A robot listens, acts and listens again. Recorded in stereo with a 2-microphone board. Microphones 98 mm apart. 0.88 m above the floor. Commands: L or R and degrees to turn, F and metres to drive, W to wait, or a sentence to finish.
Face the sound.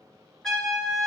L30
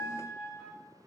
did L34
L140
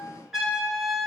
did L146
Found it: a trumpet, straight ahead, 2 to 4 m away.